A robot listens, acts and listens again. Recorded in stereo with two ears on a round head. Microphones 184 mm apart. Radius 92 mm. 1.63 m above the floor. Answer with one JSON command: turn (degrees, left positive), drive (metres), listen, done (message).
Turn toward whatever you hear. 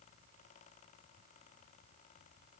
{"listen": true}
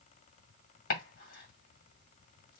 {"turn": 45}
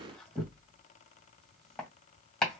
{"done": "Found it: chopping, straight ahead."}